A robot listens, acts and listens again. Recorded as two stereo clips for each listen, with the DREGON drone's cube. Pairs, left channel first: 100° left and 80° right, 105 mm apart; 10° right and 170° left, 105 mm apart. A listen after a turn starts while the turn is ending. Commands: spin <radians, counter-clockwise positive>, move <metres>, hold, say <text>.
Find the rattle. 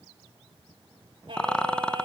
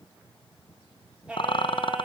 spin 0.35
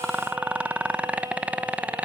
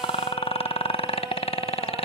say Found it: a rattle, straight ahead, 1 to 2 m away.